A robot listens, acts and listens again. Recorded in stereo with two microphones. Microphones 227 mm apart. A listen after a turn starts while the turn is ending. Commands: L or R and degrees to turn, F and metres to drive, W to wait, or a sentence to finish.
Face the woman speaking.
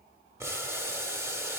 W
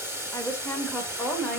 L30
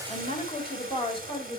L155
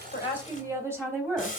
R10
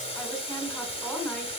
Facing the woman speaking.